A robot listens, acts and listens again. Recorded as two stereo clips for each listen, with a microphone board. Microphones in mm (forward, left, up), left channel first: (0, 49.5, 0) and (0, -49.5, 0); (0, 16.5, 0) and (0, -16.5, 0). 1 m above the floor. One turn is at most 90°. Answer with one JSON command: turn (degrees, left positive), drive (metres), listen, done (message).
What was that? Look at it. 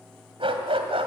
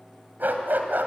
{"turn": -70}
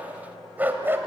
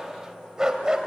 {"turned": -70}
{"turn": -25}
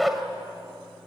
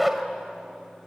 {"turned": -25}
{"done": "Found it: a dog barking, straight ahead."}